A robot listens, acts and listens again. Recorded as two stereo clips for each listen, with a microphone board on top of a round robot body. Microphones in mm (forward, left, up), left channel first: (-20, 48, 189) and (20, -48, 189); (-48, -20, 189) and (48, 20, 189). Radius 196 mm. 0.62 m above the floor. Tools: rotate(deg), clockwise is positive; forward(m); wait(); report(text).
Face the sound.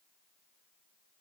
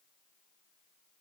wait()
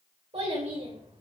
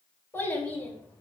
rotate(85)
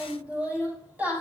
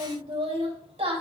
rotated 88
rotate(-10)
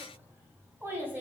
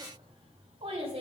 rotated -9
report("Found it: a child speaking, straight ahead.")